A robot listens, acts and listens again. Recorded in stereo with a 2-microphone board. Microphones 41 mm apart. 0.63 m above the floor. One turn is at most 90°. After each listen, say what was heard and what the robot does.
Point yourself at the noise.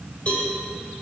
The cowbell: about 30° left or 150° left. Turn 30° left.
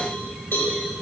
So it is at 120° left. Turn 90° left.
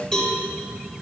The cowbell is now 30° left. Turn 30° left.
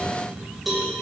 Found it: a cowbell, straight ahead.